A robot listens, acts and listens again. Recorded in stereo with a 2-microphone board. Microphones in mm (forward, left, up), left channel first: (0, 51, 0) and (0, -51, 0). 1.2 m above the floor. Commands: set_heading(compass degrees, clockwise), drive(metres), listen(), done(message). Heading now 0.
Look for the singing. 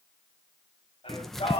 set_heading(300)
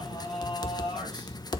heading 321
set_heading(246)
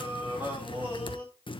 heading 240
set_heading(260)
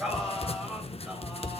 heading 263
done("Found it: singing, straight ahead.")